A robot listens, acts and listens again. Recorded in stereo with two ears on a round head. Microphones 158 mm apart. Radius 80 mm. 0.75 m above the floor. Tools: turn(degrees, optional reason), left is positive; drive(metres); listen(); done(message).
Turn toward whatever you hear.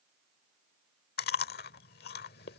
turn(degrees=55, reason="The chewing: about 55° left or 125° left.")
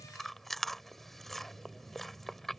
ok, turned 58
done("Facing the chewing.")